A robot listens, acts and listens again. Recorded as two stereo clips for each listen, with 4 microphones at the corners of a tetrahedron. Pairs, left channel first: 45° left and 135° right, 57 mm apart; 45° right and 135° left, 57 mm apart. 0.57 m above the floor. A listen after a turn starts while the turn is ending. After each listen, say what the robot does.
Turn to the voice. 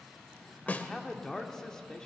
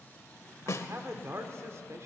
Turn 125° left.
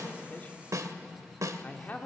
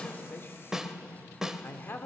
Turn 10° right.
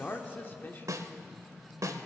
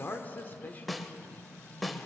Found it: a man speaking, straight ahead, 1 to 2 m away.